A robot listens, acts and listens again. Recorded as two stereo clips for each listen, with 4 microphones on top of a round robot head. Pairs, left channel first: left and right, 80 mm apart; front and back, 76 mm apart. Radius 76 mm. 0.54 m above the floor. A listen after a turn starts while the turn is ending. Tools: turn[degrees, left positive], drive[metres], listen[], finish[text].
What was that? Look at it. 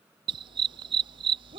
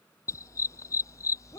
Thought: The dog barking: 60° right.
Action: turn[-60]
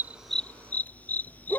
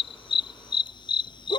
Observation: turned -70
Thought: The dog barking is now 15° left.
Action: turn[15]
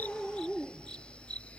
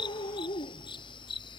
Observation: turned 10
Thought: The dog barking is now 10° left.
Action: turn[10]
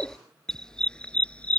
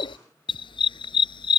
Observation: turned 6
Thought: The dog barking is now 10° left.
Action: turn[10]
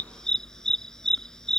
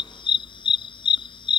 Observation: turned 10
Action: finish[Facing the dog barking.]